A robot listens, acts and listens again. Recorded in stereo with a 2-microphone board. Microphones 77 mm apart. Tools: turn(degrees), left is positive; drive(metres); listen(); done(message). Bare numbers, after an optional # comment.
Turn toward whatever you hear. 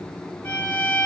# The violin: about 20° left or 160° left.
turn(20)
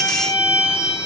# So it is at 140° left.
turn(140)
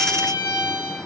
# The violin is now 40° left.
turn(40)
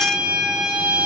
# The violin is now 10° right.
turn(-10)
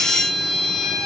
done("Facing the violin.")